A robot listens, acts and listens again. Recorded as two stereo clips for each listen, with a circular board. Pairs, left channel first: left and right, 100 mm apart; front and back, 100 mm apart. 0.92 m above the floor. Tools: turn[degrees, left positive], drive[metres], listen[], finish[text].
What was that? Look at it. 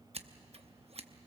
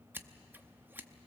Thought: The scissors: 110° right.
Action: turn[-110]
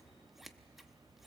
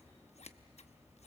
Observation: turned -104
Action: finish[Facing the scissors, under 1 m away.]